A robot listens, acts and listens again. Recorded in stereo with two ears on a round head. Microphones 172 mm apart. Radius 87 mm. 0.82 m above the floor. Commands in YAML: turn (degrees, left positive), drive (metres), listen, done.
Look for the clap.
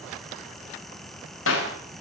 turn: 90
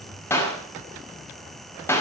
turn: 10
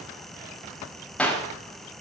done: "Facing the clap, over 4 m away."